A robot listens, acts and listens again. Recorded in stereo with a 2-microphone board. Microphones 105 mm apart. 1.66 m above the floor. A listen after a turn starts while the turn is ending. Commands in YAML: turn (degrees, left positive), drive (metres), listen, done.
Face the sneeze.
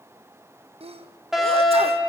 turn: -75
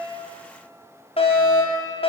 listen: true
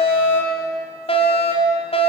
done: "I heard a sneeze, but can't make it out now. It was about straight ahead or 30° right."